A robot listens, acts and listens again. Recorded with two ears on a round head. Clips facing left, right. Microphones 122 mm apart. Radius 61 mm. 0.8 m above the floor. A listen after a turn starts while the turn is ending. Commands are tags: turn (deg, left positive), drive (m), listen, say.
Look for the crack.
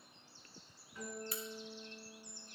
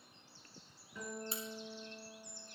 <turn deg="-25"/>
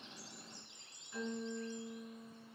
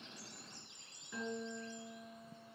<listen/>
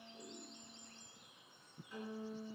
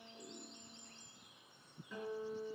<say>I heard a crack, but can't make it out now. It was about straight ahead or 130° right.</say>